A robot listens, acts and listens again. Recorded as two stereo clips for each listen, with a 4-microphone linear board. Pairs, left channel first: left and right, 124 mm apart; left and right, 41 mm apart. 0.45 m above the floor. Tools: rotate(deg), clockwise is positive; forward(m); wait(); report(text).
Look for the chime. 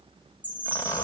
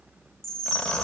rotate(-30)
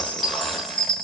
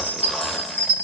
rotate(-135)
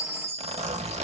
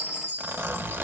rotate(-60)
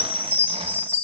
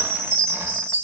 rotate(-15)
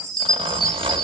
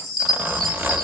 report("Found it: a chime, straight ahead, 1 to 2 m away.")